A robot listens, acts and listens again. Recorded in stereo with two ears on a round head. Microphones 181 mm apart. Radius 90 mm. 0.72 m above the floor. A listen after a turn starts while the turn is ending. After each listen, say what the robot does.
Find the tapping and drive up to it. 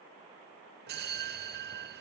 Keep listening.
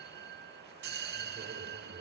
Keep listening.
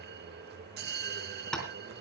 Turn 30° left.
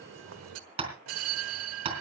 Turn 30° right.
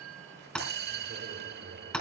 Drive 1.0 m forward.
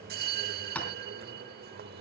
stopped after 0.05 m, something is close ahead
Turn 10° left.
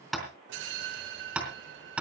Blocked. The tapping is further on, straight ahead.